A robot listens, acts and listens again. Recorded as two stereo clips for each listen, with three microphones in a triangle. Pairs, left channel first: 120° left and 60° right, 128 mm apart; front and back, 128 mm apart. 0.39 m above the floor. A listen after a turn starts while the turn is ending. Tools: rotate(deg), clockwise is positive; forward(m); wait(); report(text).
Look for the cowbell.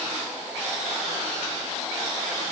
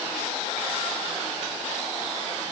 wait()
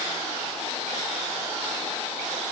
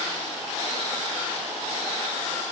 wait()
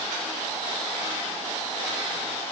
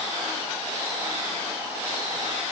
report("I can't make out a cowbell to turn to.")